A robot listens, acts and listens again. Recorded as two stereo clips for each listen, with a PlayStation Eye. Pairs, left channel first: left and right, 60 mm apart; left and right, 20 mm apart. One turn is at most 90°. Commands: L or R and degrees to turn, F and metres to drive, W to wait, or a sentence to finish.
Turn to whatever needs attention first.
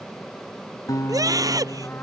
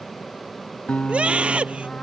R90
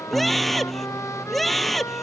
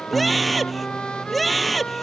Facing the scream.